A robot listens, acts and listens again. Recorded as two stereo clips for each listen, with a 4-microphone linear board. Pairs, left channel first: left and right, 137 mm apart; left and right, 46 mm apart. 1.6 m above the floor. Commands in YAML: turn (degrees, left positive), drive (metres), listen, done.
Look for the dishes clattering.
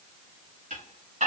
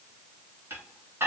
turn: -90
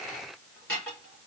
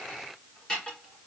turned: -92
turn: 10
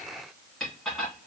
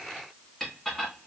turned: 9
done: "Found it: dishes clattering, straight ahead, 2 to 4 m away."